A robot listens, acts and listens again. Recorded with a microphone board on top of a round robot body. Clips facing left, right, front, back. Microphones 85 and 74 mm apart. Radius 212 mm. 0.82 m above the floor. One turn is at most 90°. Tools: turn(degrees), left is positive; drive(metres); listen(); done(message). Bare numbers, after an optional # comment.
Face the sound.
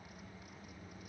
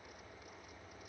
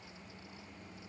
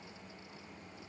listen()
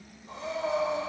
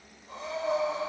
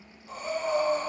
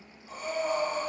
# The breathing: 90° left.
turn(90)
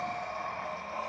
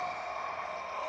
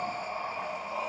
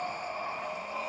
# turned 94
done("Facing the breathing.")